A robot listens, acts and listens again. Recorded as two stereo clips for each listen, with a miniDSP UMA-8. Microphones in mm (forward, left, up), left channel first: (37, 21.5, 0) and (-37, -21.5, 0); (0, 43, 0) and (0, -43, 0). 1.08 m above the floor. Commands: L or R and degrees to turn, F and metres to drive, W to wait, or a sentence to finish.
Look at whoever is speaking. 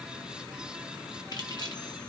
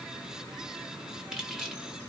W
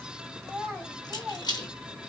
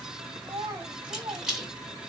R55
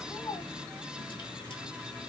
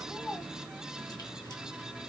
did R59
Facing the child speaking, 2 to 4 m away.